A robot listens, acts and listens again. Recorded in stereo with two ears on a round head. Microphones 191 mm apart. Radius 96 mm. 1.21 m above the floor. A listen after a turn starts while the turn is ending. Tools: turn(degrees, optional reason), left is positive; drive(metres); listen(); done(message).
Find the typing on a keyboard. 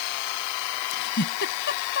listen()
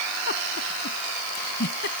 listen()
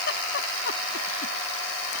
done("I can't make out typing on a keyboard, only a giggle.")